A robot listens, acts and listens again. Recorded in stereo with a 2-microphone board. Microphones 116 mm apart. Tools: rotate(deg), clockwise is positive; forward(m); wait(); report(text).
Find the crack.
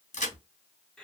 rotate(-90)
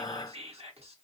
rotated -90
report("I heard a crack from this way, but can't make it out now.")